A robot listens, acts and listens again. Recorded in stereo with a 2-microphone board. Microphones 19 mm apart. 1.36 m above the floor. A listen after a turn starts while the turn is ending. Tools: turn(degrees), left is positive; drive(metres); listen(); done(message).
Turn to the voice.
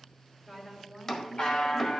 turn(degrees=30)
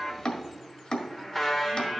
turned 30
listen()
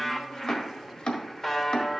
listen()
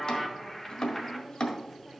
turn(degrees=-20)
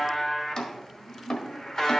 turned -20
turn(degrees=-10)
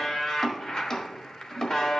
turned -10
listen()
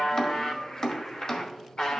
listen()
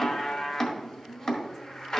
done("Found it: a woman speaking, straight ahead, 2 to 4 m away.")